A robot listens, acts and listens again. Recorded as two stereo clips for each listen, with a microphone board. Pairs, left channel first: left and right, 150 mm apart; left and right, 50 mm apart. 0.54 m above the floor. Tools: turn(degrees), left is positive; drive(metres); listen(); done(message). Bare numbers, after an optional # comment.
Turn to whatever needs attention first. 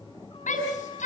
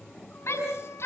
# The shout: about 55° left or 125° left.
turn(55)
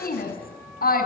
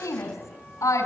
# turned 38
# So it is at 85° left.
turn(85)
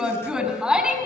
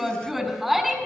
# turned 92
done("Facing the shout.")